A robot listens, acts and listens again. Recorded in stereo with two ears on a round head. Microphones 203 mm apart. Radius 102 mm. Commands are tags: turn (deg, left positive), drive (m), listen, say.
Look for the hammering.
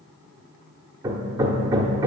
<turn deg="-30"/>
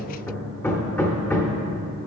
<turn deg="10"/>
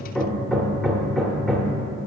<say>Facing the hammering, under 1 m away.</say>